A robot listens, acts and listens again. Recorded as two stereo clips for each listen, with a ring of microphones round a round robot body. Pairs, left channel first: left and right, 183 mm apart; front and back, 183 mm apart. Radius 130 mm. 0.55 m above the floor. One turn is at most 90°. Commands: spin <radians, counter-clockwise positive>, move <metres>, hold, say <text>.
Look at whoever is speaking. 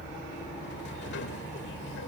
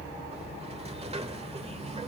hold
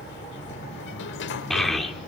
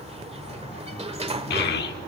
say Found it: a child speaking, straight ahead.